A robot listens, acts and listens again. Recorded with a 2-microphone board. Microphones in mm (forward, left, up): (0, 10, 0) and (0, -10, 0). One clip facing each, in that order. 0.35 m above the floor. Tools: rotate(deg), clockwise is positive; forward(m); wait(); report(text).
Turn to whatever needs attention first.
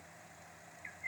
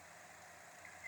wait()
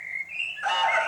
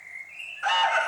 rotate(30)
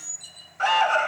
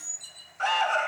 rotate(-15)
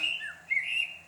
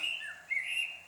wait()
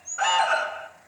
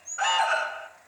report("Facing the alarm.")